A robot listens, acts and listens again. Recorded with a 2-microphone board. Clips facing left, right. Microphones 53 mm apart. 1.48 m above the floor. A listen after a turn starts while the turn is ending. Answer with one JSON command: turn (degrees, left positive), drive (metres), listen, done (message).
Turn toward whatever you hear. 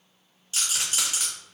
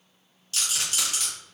{"turn": 20}
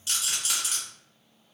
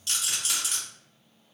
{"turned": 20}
{"done": "Facing the rattle."}